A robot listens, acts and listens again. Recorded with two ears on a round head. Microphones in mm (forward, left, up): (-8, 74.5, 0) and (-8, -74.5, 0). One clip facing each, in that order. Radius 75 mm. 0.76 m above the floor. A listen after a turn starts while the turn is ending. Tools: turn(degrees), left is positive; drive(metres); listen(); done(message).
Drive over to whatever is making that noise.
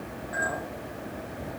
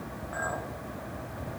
turn(degrees=20)
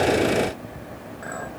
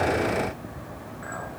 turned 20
turn(degrees=135)
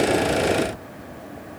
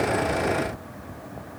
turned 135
listen()
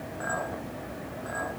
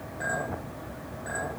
turn(degrees=-15)
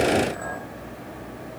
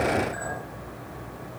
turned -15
drive(metres=1.0)
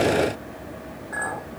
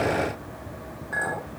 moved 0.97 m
turn(degrees=-15)
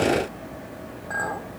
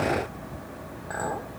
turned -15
drive(metres=1.0)
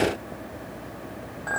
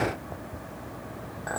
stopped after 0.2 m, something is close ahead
done("Arrived at the clink, straight ahead.")